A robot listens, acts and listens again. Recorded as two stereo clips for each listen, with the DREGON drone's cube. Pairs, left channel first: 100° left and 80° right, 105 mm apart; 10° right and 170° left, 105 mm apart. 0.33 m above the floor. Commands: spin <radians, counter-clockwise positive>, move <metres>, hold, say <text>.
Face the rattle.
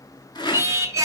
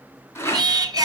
spin 0.96
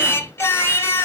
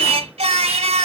hold
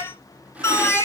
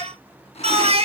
hold
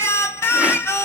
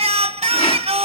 say Facing where the rattle came from. I can't hear it now.